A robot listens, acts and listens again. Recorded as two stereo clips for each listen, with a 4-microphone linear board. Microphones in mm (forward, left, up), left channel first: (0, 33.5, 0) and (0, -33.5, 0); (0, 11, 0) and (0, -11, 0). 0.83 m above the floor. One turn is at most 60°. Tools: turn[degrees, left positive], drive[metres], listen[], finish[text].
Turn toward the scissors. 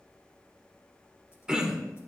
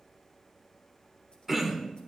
Action: listen[]
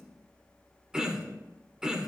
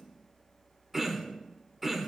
Action: listen[]
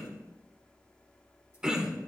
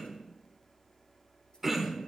Action: finish[I can't make out scissors to turn to.]